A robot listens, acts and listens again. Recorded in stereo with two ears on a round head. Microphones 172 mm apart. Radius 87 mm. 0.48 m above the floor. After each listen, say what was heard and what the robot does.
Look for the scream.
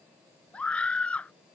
Turn 30° left.
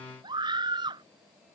So it is at 25° right. Turn 25° right.
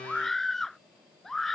Facing the scream.